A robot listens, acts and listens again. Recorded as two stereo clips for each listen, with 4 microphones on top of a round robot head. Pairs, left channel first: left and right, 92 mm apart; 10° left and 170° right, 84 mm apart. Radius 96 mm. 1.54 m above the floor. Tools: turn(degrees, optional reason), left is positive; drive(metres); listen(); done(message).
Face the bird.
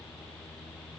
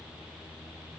listen()
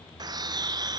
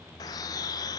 turn(degrees=-50, reason="The bird: 50° right.")
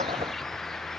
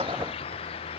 done("Facing the bird, under 1 m away.")